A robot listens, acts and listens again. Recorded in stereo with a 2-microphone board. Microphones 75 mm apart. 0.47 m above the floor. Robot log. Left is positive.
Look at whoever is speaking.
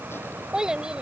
cmd yaw -30
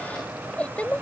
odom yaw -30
note: So it is at 20° left.
cmd yaw +20
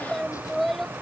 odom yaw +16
end: Facing the child speaking.